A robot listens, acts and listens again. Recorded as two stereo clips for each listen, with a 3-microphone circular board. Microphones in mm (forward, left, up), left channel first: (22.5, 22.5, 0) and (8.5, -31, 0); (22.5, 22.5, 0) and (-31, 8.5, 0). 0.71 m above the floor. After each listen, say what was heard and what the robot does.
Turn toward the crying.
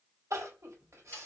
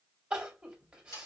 The crying: 95° right. Turn 95° right.
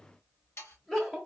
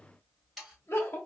Found it: crying, straight ahead.